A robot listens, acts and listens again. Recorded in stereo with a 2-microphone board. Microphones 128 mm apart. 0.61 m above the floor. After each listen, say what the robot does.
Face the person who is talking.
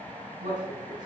Turn 90° right.
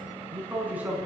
Turn 15° right.
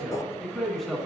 Facing the man speaking, over 4 m away.